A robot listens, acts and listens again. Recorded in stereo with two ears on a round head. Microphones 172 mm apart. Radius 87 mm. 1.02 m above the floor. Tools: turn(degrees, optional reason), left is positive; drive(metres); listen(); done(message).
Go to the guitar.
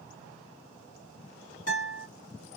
turn(degrees=45, reason="The guitar: about 45° left or 135° left.")
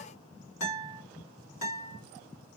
turn(degrees=90, reason="So it is at 90° left.")
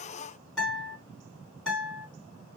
drive(metres=1.0)
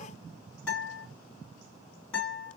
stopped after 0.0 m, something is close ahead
done("Something is in my way. I am facing the guitar but have not reached it.")